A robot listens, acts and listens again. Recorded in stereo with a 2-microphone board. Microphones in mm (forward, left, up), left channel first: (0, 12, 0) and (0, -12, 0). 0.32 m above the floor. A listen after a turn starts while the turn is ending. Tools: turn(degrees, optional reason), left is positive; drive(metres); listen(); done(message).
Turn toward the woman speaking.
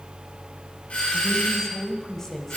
turn(degrees=20, reason="The woman speaking: about 20° left or 160° left.")
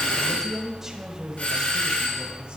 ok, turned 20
turn(degrees=-25, reason="So it is at 25° right.")
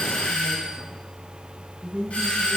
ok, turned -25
turn(degrees=-45, reason="The woman speaking is now 45° right.")
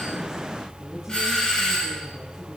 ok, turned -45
listen()
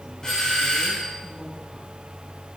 listen()
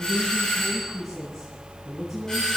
done("Found it: a woman speaking, straight ahead.")